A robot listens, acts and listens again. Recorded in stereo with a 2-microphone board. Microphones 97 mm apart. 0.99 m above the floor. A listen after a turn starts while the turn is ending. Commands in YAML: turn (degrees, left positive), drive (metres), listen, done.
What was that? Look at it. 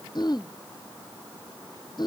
turn: 45
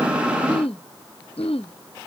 turn: 85
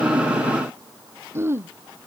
turn: -25
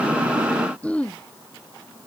turn: 15
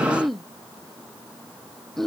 done: "Facing the throat clearing."